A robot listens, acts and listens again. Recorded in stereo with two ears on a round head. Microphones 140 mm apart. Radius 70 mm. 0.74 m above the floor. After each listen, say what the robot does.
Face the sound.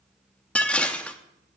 Turn 30° left.
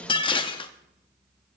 Turn 145° left.
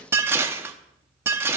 Turn 15° right.
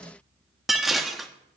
Found it: dishes clattering, straight ahead.